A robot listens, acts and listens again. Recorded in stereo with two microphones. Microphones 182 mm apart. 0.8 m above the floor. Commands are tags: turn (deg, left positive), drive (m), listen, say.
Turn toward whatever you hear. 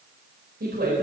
<turn deg="-65"/>
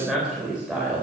<say>Facing the woman speaking.</say>